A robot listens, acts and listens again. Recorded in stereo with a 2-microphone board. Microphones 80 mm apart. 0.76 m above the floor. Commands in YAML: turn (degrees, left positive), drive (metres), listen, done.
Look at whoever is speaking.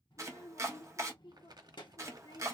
turn: 90
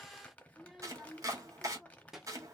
done: "Facing the child speaking, 1 to 2 m away."